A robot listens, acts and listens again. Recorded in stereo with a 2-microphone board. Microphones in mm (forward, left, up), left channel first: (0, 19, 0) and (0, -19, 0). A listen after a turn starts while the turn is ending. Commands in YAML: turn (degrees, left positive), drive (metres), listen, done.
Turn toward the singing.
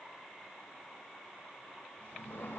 listen: true
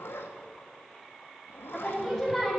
turn: 30
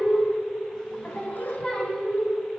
turn: 160
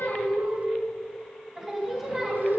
turn: -15
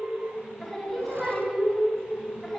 done: "Facing the singing, 2 to 4 m away."